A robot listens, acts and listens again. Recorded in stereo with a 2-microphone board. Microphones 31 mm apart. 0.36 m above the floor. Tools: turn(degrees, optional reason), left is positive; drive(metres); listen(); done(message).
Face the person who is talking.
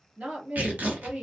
turn(degrees=-45, reason="The woman speaking: about 45° right or 135° right.")
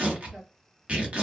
listen()
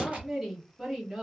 turn(degrees=-10, reason="So it is at 10° right.")
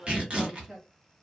done("Facing the woman speaking, 1 to 2 m away.")